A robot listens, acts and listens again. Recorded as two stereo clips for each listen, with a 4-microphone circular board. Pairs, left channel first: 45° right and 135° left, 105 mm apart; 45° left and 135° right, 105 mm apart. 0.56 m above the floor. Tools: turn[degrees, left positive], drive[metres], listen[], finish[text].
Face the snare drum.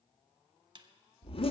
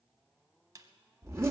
Thought: The snare drum: 170° left.
Action: turn[170]
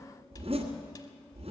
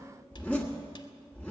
Action: listen[]
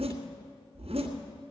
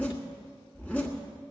Action: listen[]
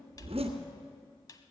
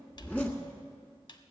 Action: finish[Found it: a snare drum, straight ahead.]